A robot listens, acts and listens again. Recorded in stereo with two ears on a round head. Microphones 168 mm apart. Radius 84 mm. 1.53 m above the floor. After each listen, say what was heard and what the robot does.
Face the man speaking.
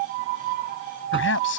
The man speaking: about 70° left or 110° left. Turn 70° left.
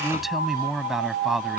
Facing the man speaking.